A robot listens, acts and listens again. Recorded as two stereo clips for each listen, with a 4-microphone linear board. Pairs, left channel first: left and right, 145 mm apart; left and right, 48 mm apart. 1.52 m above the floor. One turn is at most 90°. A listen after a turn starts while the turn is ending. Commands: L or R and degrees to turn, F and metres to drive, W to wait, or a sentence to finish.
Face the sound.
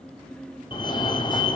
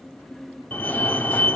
L30
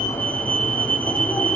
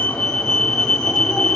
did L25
L10
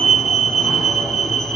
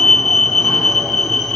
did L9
Facing the fire alarm, 1 to 2 m away.